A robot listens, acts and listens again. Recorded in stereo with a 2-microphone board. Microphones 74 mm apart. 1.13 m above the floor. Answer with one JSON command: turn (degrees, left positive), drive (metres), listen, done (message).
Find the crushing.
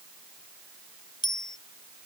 {"listen": true}
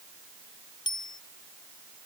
{"listen": true}
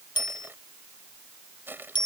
{"turn": -25}
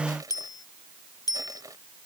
{"turn": -130}
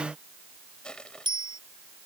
{"turn": 10}
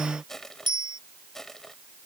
{"done": "Facing the crushing."}